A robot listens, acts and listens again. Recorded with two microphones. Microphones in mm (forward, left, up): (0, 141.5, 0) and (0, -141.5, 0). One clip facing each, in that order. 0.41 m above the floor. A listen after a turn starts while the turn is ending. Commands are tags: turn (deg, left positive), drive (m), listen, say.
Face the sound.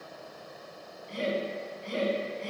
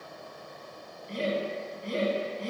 <turn deg="-45"/>
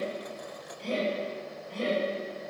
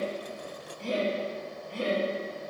<turn deg="-10"/>
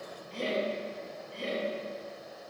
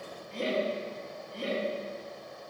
<say>Facing the laughter, 2 to 4 m away.</say>